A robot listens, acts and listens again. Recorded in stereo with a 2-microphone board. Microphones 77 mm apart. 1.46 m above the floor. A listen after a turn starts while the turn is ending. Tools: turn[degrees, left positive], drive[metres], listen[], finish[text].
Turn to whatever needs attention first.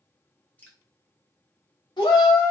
Action: turn[90]
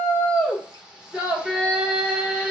Thought: So it is at 10° right.
Action: turn[-10]
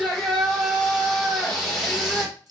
Action: finish[Facing the shout, 1 to 2 m away.]